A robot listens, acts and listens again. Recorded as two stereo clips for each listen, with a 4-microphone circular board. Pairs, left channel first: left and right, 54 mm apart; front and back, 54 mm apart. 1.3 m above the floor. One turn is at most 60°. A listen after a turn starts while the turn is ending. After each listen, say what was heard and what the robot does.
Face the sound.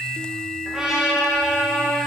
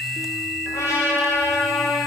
The trumpet: 10° right. Turn 10° right.
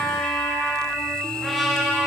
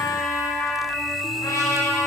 Facing the trumpet, 1 to 2 m away.